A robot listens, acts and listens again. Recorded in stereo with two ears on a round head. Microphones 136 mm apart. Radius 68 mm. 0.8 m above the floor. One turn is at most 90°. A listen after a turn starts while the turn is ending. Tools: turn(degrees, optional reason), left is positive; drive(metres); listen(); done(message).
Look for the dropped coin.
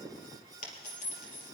turn(degrees=55, reason="The dropped coin: about 55° left or 125° left.")
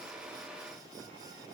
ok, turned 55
listen()
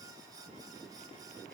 done("I heard a dropped coin, but can't make it out now. It was about straight ahead or 70° left.")